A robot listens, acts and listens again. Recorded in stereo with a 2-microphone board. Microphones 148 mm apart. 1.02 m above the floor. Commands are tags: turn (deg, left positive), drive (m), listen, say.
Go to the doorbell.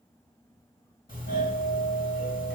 <turn deg="75"/>
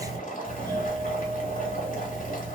<turn deg="25"/>
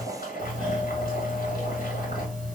<drive m="1.0"/>
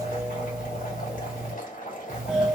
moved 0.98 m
<drive m="1.0"/>
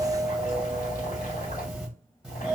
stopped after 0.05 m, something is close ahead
<say>I am next to the doorbell.</say>